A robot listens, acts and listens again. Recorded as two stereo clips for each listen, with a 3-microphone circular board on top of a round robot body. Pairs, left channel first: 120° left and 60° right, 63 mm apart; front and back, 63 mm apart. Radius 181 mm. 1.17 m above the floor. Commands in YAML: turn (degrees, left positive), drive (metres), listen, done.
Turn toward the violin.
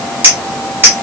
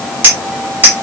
listen: true
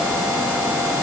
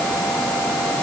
listen: true
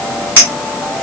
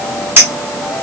done: "I can't make out a violin, only a clink."